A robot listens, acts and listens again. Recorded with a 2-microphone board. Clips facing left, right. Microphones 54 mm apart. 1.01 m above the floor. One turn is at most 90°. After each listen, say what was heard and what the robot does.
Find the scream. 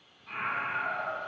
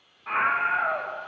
The scream: about 70° right or 110° right. Turn 70° right.
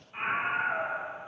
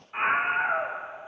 So it is at 40° right. Turn 40° right.
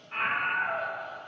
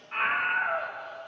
The scream is now 15° right. Turn 15° right.
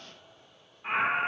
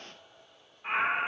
Found it: a scream, straight ahead, under 1 m away.